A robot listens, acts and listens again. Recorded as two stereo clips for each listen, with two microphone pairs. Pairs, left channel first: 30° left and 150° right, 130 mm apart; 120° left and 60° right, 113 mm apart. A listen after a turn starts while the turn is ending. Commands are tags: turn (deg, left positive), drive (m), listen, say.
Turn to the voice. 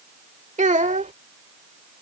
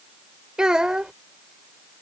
<turn deg="-145"/>
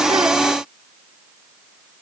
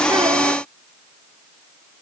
<listen/>
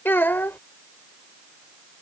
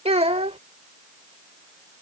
<turn deg="-45"/>
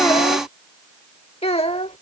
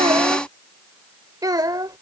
<turn deg="-10"/>
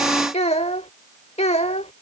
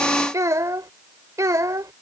<say>Found it: a child speaking, straight ahead.</say>